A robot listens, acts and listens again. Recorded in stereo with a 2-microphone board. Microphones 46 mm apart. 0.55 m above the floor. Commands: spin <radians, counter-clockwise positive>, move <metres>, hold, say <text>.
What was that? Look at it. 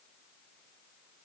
hold
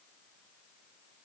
hold
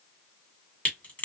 spin 0.61
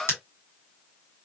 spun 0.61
spin 1.92
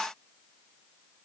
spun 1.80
say Facing where the crack came from. I can't hear it now.